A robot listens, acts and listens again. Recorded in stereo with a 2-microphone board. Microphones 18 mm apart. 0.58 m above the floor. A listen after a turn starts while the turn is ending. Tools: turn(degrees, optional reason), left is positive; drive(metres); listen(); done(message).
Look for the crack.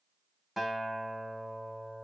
listen()
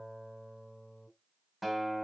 listen()
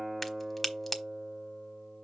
turn(degrees=30)
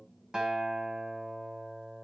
listen()
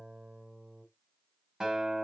done("I heard a crack, but can't make it out now. It was about 20° right or 140° left.")